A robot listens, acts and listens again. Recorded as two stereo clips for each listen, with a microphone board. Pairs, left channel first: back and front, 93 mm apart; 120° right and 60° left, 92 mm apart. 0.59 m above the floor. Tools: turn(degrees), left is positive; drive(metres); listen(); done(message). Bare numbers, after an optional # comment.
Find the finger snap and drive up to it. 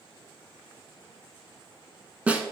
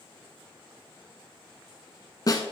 listen()
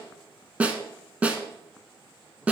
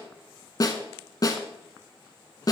listen()
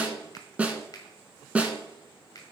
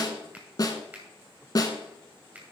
# The finger snap: 135° left.
turn(135)
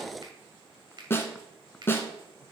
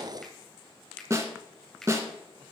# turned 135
# The finger snap is now 35° right.
turn(-35)
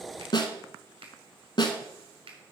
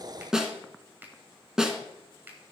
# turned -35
# The finger snap is now 10° right.
turn(-10)
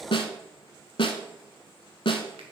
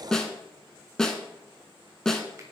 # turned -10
listen()
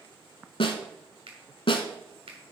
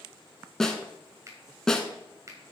drive(1.0)
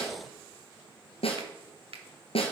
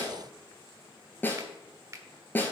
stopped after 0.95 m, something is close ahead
done("I am next to the finger snap.")